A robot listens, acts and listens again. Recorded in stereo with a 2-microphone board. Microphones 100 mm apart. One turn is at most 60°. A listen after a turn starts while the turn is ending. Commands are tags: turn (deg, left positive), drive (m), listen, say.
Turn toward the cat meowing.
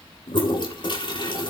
<listen/>
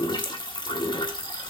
<listen/>
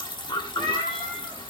<turn deg="30"/>
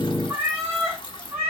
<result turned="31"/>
<turn deg="-25"/>
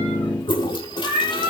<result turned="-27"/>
<say>Facing the cat meowing.</say>